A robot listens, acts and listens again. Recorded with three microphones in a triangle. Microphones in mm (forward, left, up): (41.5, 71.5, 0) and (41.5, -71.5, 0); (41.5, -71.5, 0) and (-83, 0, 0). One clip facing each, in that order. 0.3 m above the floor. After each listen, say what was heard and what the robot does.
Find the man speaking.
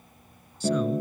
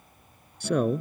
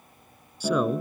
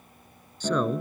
The man speaking: 115° right. Turn 115° right.
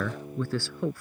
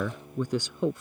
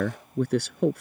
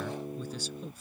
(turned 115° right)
The man speaking is now 20° right. Turn 20° right.
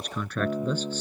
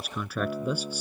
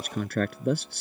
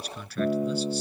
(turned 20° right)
The man speaking is now 10° right. Turn 10° right.
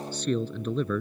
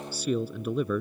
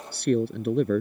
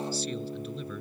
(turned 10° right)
The man speaking is now 10° right. Turn 10° right.
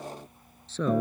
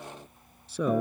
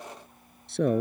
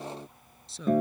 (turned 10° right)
The man speaking is now 10° right. Turn 10° right.
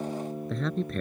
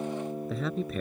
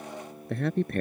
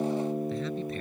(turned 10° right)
Facing the man speaking.